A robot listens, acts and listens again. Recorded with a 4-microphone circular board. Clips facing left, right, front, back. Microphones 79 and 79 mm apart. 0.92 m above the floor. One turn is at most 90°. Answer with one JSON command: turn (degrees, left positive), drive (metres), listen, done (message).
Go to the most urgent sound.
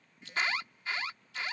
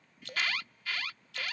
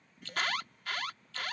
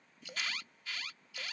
{"turn": 25}
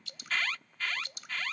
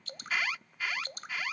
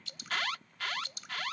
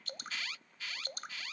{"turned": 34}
{"turn": -10}
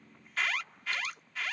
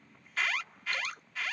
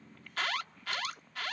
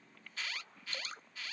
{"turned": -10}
{"drive": 1.0}
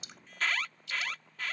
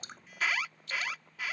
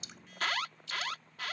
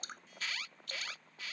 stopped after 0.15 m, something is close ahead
{"turn": -10}
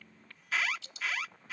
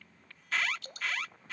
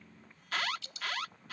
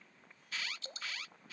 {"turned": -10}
{"done": "Blocked. The alarm is further on, straight ahead."}